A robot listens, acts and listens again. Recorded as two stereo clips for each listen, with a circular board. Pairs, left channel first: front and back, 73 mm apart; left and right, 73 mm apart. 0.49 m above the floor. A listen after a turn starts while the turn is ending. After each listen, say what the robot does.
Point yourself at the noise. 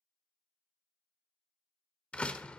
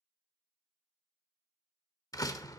Turn 70° left.
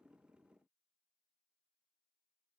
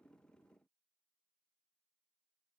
Facing where the door slam came from. I can't hear it now.